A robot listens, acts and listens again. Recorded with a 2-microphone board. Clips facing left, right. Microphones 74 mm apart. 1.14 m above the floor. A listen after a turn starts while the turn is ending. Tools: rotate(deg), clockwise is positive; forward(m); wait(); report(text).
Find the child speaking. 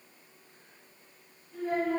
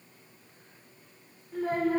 rotate(90)
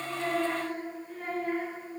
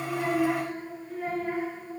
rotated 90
report("Facing the child speaking.")